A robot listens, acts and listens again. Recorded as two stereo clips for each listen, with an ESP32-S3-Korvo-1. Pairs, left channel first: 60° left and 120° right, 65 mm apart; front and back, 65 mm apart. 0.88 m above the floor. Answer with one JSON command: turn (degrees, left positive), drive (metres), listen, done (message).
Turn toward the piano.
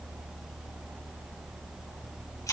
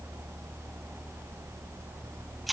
{"listen": true}
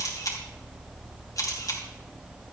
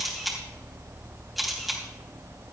{"listen": true}
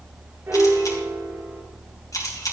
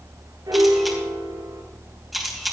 {"turn": -170}
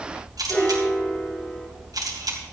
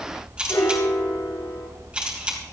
{"done": "Facing the piano, 2 to 4 m away."}